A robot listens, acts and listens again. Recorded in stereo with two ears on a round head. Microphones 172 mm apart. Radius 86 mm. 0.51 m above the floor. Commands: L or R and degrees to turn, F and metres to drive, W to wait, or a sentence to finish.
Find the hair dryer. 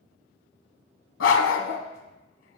W
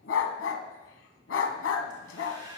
R25
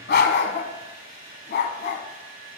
R130
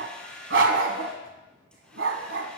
Found it: a hair dryer, straight ahead.